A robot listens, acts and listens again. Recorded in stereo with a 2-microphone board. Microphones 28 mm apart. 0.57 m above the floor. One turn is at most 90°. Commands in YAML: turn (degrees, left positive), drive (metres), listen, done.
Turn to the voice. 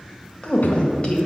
turn: 35
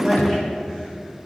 done: "Facing the woman speaking."